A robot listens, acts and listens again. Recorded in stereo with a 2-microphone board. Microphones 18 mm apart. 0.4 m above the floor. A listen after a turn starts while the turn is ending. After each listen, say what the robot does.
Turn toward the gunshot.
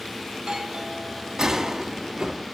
Turn 40° right.
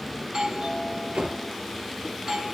Keep listening.
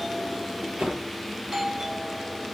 I heard a gunshot, but can't make it out now. It was about straight ahead or 100° right.